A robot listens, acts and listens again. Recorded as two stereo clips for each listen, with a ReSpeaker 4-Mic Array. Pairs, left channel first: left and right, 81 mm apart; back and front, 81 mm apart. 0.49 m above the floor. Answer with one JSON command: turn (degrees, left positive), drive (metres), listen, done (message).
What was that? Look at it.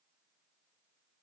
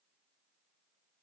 {"listen": true}
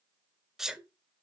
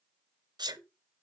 {"done": "Found it: a sneeze, straight ahead, 1 to 2 m away."}